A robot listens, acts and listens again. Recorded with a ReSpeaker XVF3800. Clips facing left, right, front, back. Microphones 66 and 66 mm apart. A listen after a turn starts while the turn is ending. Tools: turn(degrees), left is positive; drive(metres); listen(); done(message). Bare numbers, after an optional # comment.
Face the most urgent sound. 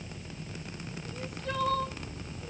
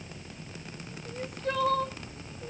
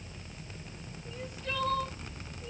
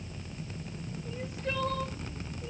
# The crying: 115° right.
turn(-115)
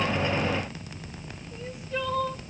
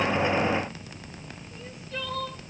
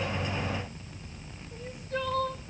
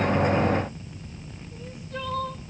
# The crying is now 20° left.
turn(20)
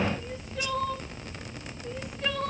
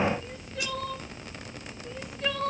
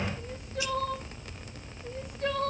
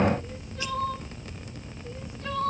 done("Facing the crying, 2 to 4 m away.")